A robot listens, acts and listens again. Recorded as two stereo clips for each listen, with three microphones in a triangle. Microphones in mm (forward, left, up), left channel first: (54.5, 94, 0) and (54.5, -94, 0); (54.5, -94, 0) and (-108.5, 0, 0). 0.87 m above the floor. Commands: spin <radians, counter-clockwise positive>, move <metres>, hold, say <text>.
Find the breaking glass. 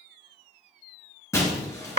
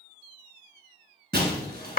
spin 2.79
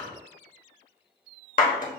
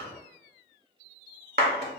say Facing where the breaking glass came from. I can't hear it now.